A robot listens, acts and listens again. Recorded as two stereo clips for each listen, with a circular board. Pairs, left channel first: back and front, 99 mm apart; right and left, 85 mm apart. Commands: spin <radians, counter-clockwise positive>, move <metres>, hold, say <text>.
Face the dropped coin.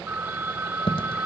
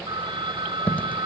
spin -2.79
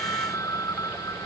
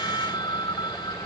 say I heard a dropped coin from this way, but can't make it out now.